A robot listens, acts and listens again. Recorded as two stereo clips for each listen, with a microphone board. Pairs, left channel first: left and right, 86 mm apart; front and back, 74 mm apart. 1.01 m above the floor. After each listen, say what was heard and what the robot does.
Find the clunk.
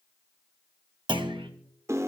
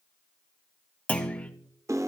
The clunk: 70° right. Turn 70° right.
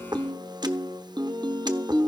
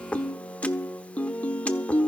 Facing where the clunk came from. I can't hear it now.